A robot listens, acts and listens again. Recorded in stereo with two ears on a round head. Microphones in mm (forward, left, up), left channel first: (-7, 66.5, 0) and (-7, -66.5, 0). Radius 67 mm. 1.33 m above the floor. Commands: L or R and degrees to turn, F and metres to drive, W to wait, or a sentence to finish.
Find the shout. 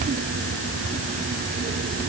W
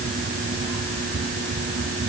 W
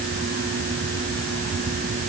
I can't make out a shout.